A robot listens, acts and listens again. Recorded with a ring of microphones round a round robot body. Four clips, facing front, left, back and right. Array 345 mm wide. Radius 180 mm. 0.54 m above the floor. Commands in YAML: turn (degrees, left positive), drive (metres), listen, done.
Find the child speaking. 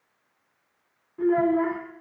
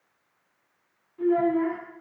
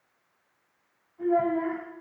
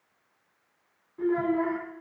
turn: -10
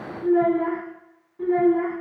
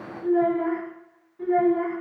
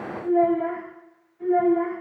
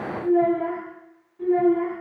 turn: 10
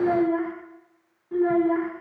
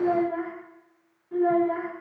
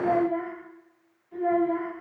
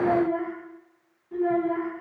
done: "Found it: a child speaking, straight ahead."